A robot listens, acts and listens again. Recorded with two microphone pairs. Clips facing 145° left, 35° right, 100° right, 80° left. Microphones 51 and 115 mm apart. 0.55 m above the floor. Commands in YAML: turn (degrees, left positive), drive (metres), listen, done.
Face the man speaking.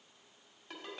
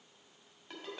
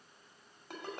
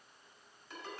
listen: true
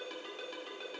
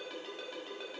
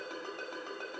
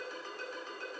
listen: true
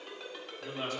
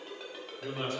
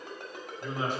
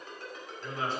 turn: -35
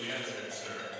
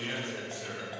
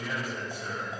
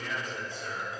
turn: -35
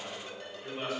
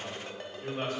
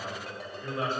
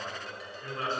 turn: -30
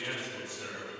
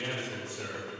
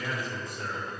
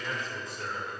turn: -15
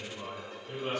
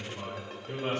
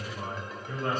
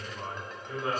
done: "Facing the man speaking, 2 to 4 m away."